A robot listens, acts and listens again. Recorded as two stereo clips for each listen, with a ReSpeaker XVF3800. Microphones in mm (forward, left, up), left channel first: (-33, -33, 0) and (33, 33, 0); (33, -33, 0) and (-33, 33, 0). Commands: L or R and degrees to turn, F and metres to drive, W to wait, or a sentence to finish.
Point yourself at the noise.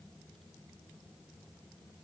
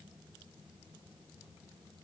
W
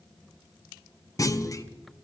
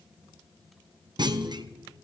L175
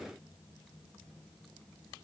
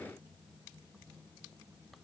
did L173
Facing where the clunk came from. I can't hear it now.